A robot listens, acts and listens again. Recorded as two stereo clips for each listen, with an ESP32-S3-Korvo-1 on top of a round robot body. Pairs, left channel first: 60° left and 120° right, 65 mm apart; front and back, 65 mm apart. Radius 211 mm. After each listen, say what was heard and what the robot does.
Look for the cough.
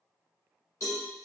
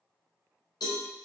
Keep listening.
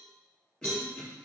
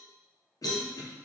The cough: 15° right. Turn 15° right.
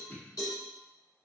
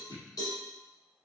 Found it: a cough, straight ahead, 1 to 2 m away.